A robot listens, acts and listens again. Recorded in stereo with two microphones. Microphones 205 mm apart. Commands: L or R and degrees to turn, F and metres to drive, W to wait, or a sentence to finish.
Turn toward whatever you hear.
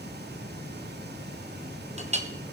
R30
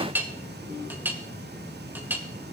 R10
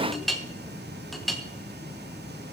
Found it: a clink, straight ahead, 1 to 2 m away.